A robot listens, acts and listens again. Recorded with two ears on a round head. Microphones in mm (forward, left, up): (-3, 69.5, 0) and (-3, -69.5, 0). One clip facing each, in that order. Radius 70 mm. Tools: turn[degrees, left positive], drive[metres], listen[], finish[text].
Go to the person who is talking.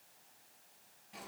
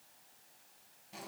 Action: listen[]
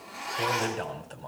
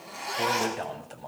Action: turn[-30]
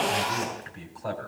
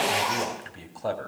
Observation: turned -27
Thought: So it is at 140° right.
Action: turn[-140]
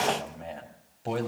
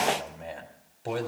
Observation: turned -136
Action: drive[1.0]
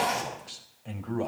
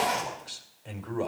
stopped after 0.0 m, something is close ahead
Action: finish[Blocked. The man speaking is further on, straight ahead.]